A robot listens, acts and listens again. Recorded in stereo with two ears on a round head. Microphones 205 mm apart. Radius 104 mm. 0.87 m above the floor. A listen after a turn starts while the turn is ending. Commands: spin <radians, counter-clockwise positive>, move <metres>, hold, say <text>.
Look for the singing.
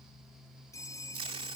hold
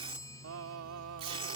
spin -1.22
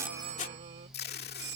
hold
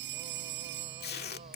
hold
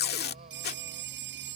say I heard singing, but can't make it out now. It was about straight ahead or 40° right.